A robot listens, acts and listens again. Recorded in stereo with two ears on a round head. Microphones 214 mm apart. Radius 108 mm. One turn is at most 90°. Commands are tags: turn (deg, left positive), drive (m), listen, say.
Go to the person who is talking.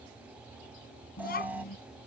<turn deg="45"/>
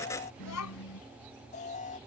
<turn deg="90"/>
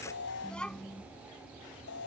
<drive m="1.0"/>
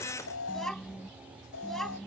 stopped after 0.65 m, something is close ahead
<say>Blocked. The child speaking is further on, straight ahead.</say>